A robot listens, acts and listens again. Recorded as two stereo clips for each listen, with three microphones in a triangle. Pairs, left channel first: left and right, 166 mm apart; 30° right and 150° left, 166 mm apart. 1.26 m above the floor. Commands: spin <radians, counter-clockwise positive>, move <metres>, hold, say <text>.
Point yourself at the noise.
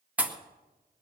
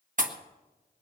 spin -2.97
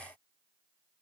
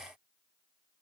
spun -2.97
say I heard a pop from this way, but can't make it out now.